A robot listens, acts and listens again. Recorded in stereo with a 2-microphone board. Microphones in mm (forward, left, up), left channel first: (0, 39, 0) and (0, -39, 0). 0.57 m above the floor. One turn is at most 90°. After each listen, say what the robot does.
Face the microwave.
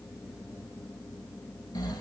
Keep listening.
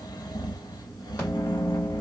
Turn 25° left.
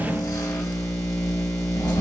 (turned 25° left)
Turn 90° left.
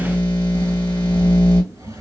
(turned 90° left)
Turn 30° left.
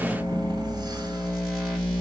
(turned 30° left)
Found it: a microwave, straight ahead.